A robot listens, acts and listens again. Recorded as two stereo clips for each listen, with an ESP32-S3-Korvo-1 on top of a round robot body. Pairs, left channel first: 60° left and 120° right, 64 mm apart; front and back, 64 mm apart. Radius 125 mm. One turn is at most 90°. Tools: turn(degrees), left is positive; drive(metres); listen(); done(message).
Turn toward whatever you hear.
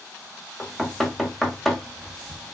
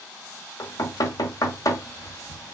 turn(degrees=-30)
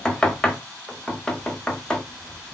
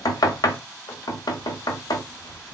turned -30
turn(degrees=-15)
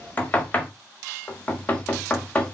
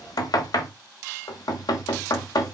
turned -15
done("Found it: knocking, straight ahead, 1 to 2 m away.")